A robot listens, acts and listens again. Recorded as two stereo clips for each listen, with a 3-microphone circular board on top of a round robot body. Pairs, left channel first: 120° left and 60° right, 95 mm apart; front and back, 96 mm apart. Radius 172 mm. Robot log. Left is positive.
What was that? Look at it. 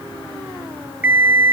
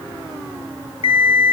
note: The alarm clock: 15° left.
cmd yaw +15
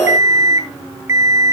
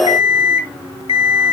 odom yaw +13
end: Facing the alarm clock.